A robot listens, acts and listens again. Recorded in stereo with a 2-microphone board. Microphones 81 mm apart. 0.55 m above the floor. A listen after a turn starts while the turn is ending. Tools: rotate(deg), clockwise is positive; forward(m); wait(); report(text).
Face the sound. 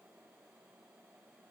wait()
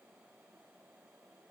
wait()
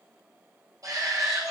rotate(45)
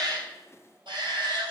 rotate(90)
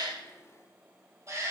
rotate(40)
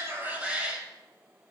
rotate(15)
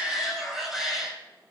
report("Found it: a shout, straight ahead, 2 to 4 m away.")